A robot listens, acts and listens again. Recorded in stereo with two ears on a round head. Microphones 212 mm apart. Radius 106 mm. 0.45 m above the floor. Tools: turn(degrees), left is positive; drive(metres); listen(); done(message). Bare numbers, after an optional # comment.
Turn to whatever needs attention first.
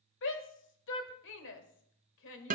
# The shout: about 55° left or 125° left.
turn(55)
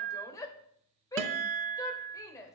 # So it is at 15° left.
turn(15)
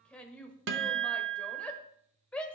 done("Facing the shout.")